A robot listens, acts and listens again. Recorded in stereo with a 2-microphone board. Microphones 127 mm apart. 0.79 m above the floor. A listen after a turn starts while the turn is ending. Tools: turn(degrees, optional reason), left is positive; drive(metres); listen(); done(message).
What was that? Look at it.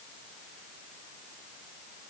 listen()
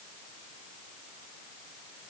listen()
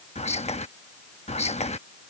turn(degrees=60, reason="The whispering: about 60° left or 120° left.")
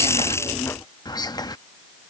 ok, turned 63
turn(degrees=40, reason="So it is at 40° left.")
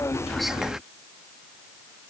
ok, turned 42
listen()
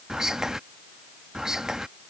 done("Found it: whispering, straight ahead.")